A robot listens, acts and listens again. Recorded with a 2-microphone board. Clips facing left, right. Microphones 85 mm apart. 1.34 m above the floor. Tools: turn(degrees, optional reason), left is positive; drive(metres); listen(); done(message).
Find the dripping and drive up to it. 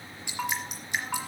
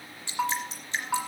turn(degrees=15, reason="The dripping: about 15° left or 165° left.")
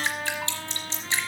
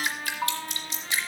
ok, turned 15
turn(degrees=150, reason="So it is at 150° left.")
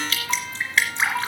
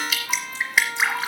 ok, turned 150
turn(degrees=-10, reason="The dripping is now 10° right.")
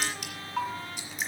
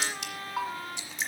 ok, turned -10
drive(metres=1.0)
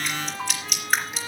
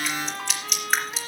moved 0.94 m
drive(metres=1.0)
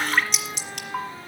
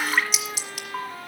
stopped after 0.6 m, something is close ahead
done("Arrived at the dripping, straight ahead.")